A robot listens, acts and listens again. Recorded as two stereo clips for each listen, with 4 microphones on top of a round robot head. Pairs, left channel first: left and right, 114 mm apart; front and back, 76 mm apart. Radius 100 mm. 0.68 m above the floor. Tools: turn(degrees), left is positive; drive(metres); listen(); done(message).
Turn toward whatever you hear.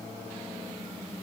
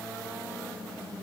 listen()
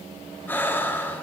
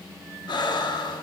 turn(degrees=15)
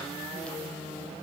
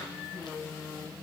listen()
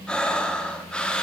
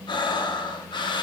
turn(degrees=10)
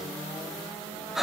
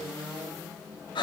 done("Found it: breathing, straight ahead, under 1 m away.")